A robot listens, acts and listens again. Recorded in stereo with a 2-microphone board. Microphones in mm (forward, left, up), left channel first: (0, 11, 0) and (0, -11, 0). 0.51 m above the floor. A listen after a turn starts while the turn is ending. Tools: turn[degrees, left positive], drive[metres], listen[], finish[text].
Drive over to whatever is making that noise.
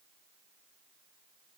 Action: listen[]
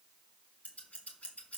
Action: turn[90]
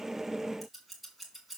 Action: drive[1.0]
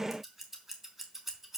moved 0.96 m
Thought: The scissors is now 15° right.
Action: turn[-15]
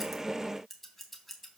Action: drive[1.0]
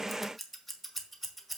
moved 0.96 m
Action: drive[1.0]
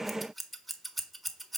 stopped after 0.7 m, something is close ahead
Action: finish[I am next to the scissors.]